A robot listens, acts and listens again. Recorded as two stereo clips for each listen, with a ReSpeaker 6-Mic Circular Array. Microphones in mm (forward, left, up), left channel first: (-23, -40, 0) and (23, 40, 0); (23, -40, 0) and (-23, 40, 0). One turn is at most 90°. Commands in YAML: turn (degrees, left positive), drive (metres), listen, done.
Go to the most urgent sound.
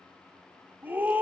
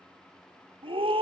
turn: 90
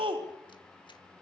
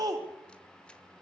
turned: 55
turn: 75
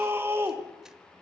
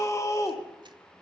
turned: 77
drive: 1.0
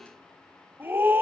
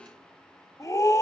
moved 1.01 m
drive: 1.0
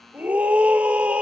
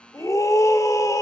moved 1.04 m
turn: -15
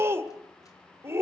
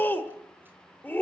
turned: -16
drive: 1.0
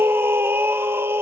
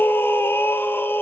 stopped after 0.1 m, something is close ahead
done: "Arrived at the scream, straight ahead."